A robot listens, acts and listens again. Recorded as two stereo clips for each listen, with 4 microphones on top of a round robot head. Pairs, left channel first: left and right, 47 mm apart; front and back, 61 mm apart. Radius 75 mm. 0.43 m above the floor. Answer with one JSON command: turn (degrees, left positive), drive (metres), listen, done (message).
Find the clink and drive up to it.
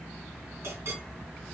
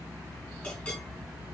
{"turn": -75}
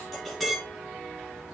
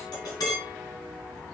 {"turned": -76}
{"drive": 1.0}
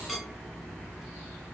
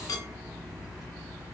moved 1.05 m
{"drive": 1.0}
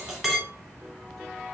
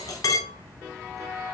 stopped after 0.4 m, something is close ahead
{"turn": -10}
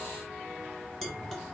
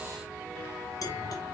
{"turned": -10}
{"done": "I am next to the clink."}